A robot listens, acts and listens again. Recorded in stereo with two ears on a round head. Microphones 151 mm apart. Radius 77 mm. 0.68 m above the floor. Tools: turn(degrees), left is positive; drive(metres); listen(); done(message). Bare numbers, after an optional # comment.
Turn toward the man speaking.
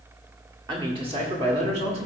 # The man speaking: about 40° right or 140° right.
turn(-40)
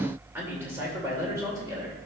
# So it is at 20° right.
turn(-20)
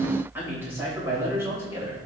# The man speaking is now 15° right.
turn(-15)
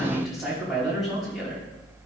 done("Facing the man speaking.")